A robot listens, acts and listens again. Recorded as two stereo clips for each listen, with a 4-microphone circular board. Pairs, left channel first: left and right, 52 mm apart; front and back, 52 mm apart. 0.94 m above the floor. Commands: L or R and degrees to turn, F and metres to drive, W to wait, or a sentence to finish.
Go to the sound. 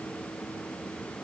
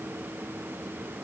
W
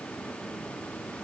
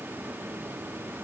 W
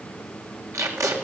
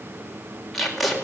R90
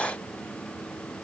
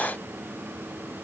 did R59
R30
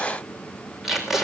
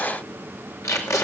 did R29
F1.0
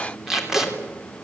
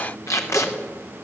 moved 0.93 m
F1.0
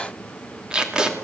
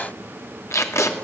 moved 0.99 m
R15
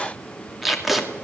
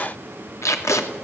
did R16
F1.0
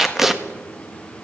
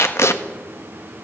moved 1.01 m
F1.0
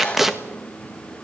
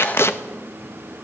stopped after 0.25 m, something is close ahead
I am next to the tape being pulled.